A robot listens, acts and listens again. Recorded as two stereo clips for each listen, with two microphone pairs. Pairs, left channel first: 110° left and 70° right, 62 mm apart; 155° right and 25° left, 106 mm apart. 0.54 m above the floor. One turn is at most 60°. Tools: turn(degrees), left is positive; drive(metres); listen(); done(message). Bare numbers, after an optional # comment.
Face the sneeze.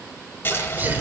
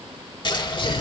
# The sneeze: 125° right.
turn(-60)
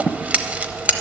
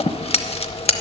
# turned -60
# Nothing new. It was at 65° right.
turn(-60)
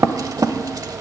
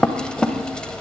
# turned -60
done("Facing where the sneeze came from. I can't hear it now.")